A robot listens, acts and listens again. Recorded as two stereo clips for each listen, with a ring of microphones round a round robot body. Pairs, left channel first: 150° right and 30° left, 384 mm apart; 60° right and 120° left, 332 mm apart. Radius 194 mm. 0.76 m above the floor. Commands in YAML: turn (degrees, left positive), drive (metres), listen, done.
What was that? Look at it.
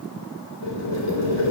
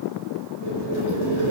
turn: -105
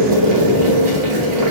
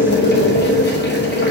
done: "Facing the boiling, 2 to 4 m away."